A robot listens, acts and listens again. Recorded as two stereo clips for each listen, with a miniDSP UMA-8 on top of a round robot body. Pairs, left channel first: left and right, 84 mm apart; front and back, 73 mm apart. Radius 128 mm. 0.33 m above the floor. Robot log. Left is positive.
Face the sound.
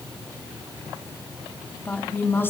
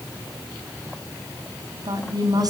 note: The woman speaking: 155° left.
cmd yaw +155
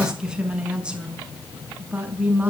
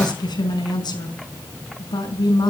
note: The woman speaking is now 20° right.
cmd yaw -20
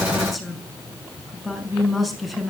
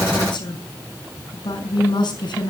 end: Facing the woman speaking, over 4 m away.